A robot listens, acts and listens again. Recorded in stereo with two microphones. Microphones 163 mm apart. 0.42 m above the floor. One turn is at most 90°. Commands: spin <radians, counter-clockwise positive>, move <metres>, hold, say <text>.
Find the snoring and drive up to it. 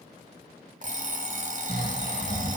spin -1.57
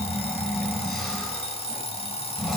move 1.0
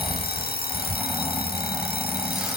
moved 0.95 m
hold
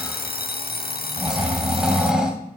move 1.0
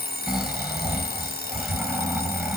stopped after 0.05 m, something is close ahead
say Arrived at the snoring, straight ahead.